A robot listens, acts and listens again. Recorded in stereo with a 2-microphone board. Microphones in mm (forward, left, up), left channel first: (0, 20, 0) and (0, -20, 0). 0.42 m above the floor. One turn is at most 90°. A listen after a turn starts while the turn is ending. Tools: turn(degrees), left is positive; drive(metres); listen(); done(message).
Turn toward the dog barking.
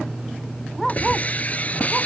turn(degrees=30)
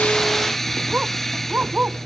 turn(degrees=-35)
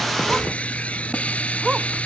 turn(degrees=-10)
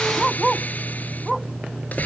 done("Found it: a dog barking, straight ahead.")